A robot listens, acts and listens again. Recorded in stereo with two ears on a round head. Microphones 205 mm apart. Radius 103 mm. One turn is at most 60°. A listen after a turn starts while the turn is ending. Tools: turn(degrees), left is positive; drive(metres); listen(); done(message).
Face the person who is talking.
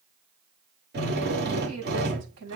turn(degrees=-60)
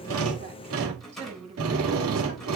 turn(degrees=-30)
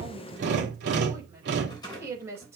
turn(degrees=-10)
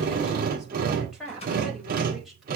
done("Facing the woman speaking, over 4 m away.")